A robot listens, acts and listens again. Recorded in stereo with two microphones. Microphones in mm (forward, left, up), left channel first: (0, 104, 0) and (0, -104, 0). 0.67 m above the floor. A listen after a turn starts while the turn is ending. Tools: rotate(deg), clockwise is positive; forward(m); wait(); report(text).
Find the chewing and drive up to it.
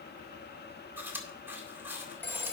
rotate(30)
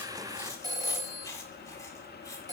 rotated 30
rotate(-15)
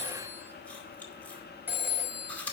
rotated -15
rotate(-10)
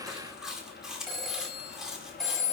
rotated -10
forward(1.0)
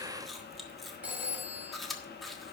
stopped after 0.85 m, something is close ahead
report("Arrived at the chewing, straight ahead.")